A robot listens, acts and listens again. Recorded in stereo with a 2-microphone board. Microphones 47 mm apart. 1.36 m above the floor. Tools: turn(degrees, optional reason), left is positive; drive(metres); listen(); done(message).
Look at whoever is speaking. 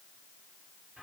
listen()
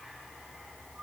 listen()
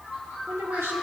turn(degrees=-70, reason="The woman speaking: about 70° right or 110° right.")
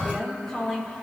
turn(degrees=10, reason="So it is at 10° left.")
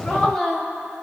turn(degrees=10, reason="The woman speaking is now 10° left.")
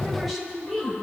done("Found it: a woman speaking, straight ahead, over 4 m away.")